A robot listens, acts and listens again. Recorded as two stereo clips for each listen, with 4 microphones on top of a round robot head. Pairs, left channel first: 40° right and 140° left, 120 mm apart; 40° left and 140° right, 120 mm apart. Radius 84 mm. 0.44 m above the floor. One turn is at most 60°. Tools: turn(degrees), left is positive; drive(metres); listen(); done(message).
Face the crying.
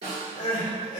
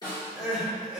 turn(degrees=-50)
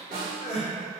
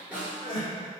turn(degrees=-10)
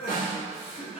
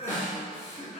done("Facing the crying.")